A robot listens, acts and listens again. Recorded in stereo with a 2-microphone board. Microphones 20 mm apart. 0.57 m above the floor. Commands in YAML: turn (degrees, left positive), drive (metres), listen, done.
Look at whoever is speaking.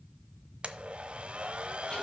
listen: true
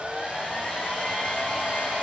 listen: true
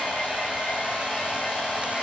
done: "I can't make out anyone speaking, only a hair dryer and a blender."